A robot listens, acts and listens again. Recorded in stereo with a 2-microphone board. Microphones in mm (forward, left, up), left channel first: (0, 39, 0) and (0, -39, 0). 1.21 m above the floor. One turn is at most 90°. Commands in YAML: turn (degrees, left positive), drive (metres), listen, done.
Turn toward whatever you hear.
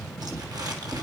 turn: -60
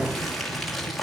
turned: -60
done: "Found it: crumpling, straight ahead, 2 to 4 m away."